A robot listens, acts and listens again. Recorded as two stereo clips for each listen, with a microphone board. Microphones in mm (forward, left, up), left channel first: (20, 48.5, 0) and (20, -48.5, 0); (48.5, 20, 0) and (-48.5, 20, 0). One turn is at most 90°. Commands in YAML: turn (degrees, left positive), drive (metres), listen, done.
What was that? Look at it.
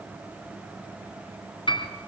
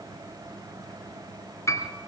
turn: 60
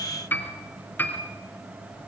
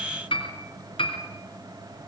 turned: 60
turn: 20
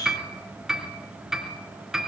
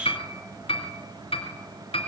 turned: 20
done: "Facing the piano."